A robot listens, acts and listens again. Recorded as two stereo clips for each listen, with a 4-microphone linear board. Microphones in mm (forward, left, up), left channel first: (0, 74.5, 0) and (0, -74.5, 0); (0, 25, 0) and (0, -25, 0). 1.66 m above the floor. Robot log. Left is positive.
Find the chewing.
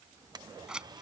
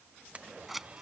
cmd idle
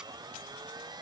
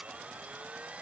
cmd idle
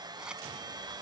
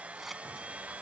end: I can't make out chewing to turn to.